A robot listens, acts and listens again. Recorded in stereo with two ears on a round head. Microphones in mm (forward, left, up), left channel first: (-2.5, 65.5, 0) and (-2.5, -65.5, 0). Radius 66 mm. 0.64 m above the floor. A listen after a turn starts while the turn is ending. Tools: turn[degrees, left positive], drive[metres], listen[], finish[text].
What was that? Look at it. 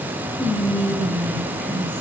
Action: turn[30]
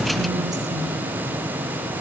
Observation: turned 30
Action: listen[]
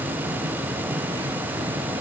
Action: listen[]
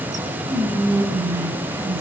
Thought: So it is at 25° right.
Action: turn[-25]
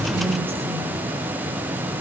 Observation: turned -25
Action: listen[]
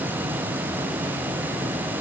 Action: listen[]
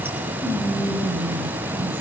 Thought: The whispering is now 15° right.
Action: turn[-15]
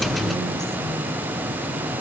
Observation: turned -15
Action: listen[]
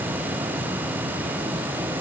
Action: listen[]
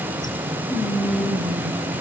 Action: finish[Facing the whispering.]